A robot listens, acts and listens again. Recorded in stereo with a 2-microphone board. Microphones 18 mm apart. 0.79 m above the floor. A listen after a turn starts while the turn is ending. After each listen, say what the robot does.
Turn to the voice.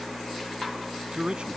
Turn 65° right.
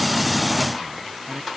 Keep listening.
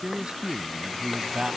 Turn 55° right.
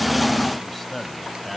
Facing the man speaking.